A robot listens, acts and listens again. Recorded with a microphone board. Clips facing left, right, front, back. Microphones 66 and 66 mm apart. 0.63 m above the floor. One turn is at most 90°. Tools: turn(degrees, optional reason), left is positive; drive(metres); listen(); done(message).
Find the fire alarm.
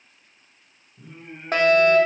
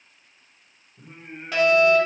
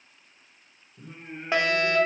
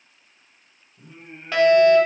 turn(degrees=65, reason="The fire alarm: 65° left.")
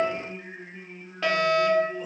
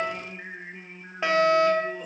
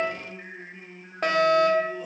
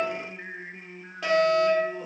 turn(degrees=-25, reason="The fire alarm is now 25° right.")
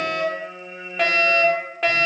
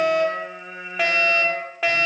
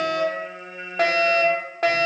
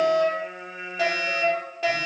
done("Facing the fire alarm.")